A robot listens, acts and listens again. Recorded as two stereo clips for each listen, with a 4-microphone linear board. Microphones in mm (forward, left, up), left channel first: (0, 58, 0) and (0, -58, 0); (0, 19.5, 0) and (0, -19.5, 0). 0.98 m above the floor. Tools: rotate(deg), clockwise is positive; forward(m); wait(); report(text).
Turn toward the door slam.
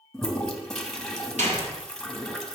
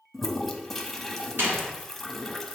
rotate(90)
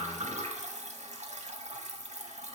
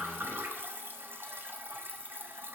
report("I heard a door slam from this way, but can't make it out now.")